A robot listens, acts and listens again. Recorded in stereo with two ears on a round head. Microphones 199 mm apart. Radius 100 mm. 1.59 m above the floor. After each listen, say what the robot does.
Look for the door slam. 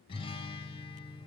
Keep listening.
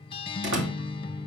Turn 55° right.
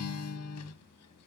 Keep listening.
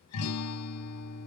I heard a door slam, but can't make it out now. It was about straight ahead or 70° right.